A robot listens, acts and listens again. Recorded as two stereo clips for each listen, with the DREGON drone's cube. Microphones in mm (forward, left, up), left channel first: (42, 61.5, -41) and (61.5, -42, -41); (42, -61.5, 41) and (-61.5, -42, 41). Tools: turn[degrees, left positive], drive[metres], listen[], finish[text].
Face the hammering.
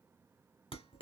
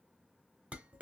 Action: listen[]
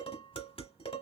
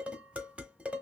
Action: listen[]
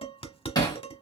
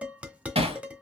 Thought: The hammering: 150° left.
Action: turn[150]
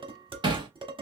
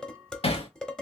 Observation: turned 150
Thought: The hammering is now 40° right.
Action: turn[-40]
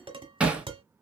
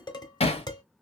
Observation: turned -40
Action: finish[Found it: hammering, straight ahead, 1 to 2 m away.]